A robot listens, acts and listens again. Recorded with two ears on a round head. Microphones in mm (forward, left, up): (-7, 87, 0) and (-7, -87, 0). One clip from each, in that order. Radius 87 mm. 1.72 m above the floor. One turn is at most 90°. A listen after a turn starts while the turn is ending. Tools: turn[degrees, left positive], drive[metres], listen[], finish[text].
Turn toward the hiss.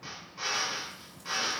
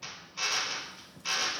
Action: listen[]
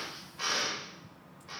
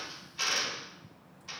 Action: listen[]
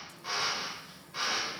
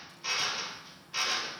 Action: finish[I can't make out a hiss, only a drill.]